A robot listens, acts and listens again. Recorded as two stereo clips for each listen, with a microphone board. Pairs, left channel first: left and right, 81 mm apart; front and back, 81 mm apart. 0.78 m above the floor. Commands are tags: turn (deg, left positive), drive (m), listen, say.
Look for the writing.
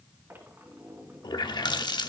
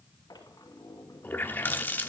<listen/>
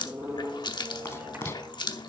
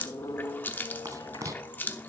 <turn deg="145"/>
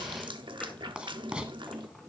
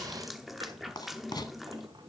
<turn deg="-15"/>
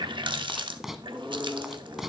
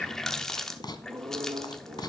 <say>Facing the writing, 1 to 2 m away.</say>